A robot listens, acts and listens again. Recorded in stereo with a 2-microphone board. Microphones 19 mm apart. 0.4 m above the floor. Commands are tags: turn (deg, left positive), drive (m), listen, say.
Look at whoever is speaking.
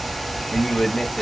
<turn deg="35"/>
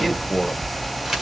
<turn deg="10"/>
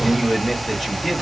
<say>Found it: a man speaking, straight ahead.</say>